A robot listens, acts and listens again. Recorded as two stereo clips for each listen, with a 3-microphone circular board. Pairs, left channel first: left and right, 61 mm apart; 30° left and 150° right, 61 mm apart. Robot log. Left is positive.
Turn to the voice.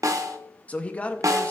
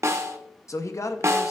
note: The man speaking: 30° left.
cmd yaw +30
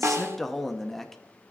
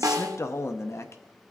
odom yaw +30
end: Facing the man speaking, under 1 m away.